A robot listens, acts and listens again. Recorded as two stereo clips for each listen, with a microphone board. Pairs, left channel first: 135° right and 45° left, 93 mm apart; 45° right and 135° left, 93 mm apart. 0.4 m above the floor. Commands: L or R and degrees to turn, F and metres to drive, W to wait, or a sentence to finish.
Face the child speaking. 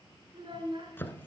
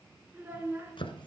L70
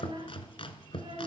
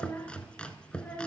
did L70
L25
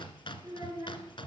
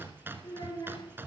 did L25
Facing the child speaking.